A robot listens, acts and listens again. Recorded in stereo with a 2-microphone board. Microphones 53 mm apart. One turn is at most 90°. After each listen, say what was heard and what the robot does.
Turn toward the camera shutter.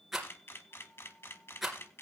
The camera shutter: about 45° left or 135° left. Turn 45° left.
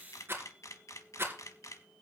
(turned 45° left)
So it is at 90° left. Turn 90° left.
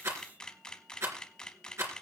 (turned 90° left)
The camera shutter is now 15° left. Turn 15° left.
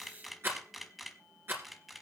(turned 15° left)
Facing the camera shutter.